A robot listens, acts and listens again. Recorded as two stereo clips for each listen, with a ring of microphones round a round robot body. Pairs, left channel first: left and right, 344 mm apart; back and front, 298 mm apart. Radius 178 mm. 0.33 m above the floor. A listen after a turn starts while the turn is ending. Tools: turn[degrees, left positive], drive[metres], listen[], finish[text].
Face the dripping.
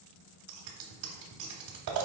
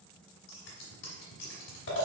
Action: listen[]
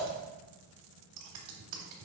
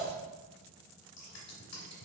Action: listen[]
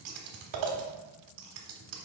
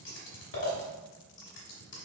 Action: finish[I can't make out dripping, only scissors.]